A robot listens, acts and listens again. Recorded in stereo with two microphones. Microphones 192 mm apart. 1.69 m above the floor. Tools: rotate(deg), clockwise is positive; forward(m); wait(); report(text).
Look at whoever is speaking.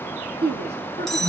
rotate(60)
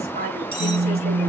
rotate(55)
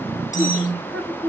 report("Found it: a woman speaking, straight ahead.")